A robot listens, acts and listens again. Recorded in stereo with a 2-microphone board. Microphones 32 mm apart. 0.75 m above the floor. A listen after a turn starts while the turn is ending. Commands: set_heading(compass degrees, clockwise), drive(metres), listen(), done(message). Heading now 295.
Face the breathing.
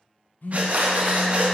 set_heading(345)
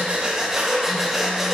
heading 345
set_heading(355)
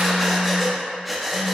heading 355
done("Facing the breathing.")